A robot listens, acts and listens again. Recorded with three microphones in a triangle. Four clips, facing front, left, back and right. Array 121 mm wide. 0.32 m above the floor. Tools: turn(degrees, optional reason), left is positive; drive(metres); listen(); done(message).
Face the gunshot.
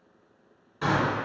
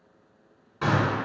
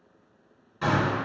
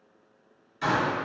turn(degrees=85, reason="The gunshot: 85° left.")
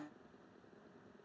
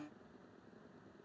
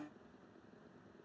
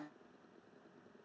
done("I heard a gunshot from this way, but can't make it out now.")